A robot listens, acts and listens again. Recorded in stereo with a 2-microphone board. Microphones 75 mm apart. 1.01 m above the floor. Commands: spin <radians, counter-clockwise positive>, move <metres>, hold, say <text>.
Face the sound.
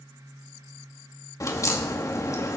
spin 0.79
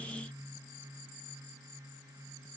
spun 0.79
hold
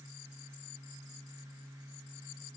say I heard a crack, but can't make it out now. It was about straight ahead or 90° left.